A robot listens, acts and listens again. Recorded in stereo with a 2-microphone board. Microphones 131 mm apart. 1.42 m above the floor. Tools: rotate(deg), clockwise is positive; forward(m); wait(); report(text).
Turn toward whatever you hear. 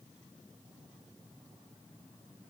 wait()
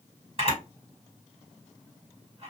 rotate(45)
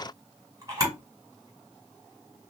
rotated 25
rotate(30)
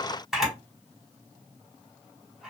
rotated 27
report("Facing the camera shutter.")